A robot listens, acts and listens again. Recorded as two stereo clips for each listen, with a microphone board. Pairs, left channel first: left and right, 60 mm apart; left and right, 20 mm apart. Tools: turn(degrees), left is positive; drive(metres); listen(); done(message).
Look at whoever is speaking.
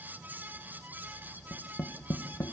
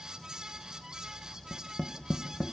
listen()
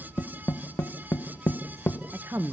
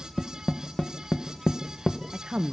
turn(degrees=-45)
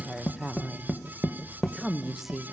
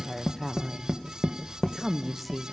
done("Facing the woman speaking, 1 to 2 m away.")